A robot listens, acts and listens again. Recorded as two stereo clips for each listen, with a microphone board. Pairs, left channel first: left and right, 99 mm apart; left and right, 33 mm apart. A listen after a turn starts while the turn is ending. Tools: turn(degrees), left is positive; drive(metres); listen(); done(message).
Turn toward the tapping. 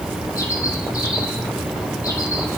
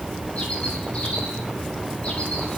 listen()
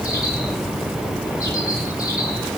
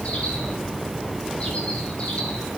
listen()
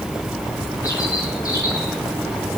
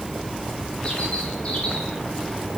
done("I can't make out tapping to turn to.")